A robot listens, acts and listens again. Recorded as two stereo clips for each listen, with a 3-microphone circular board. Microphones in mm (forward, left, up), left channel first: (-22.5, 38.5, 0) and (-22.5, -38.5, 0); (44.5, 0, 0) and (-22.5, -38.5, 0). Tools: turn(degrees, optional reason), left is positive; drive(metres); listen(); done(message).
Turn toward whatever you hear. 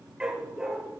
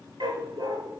turn(degrees=-170, reason="The dog barking: 170° right.")
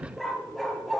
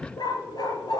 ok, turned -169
done("Found it: a dog barking, straight ahead.")